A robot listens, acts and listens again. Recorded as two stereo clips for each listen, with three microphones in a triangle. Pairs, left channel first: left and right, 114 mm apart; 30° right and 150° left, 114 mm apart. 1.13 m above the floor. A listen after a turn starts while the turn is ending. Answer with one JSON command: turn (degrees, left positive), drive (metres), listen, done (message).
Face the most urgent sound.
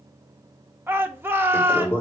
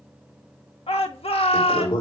{"turn": -20}
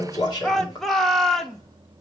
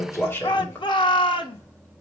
{"done": "Facing the shout."}